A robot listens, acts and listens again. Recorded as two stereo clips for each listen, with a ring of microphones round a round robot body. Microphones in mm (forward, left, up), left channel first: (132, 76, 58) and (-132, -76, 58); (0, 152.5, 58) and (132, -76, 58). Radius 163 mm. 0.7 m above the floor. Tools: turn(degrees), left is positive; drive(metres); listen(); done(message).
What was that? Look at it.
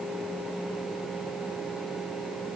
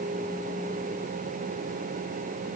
listen()
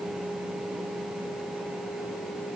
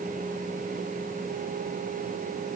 listen()
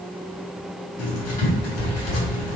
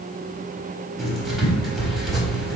turn(degrees=30)
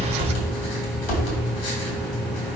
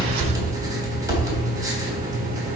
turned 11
turn(degrees=15)
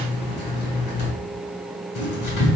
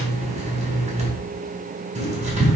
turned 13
done("Found it: writing, straight ahead, 2 to 4 m away.")